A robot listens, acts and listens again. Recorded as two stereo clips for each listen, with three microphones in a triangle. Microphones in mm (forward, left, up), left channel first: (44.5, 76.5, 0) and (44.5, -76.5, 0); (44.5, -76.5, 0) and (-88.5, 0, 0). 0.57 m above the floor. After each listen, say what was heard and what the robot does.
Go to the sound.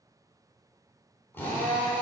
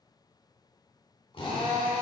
The drill: 15° left. Turn 15° left.
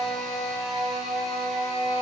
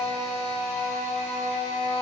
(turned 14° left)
Drive 1.0 m forward.
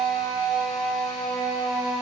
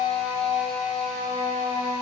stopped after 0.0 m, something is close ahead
Blocked. The drill is further on, straight ahead.